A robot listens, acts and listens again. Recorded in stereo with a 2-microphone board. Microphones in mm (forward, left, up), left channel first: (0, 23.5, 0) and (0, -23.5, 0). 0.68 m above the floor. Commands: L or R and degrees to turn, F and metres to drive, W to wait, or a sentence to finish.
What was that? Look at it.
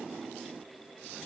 W
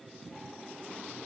W
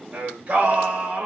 R30
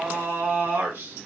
R115
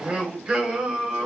R20
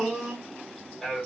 Found it: singing, straight ahead, 1 to 2 m away.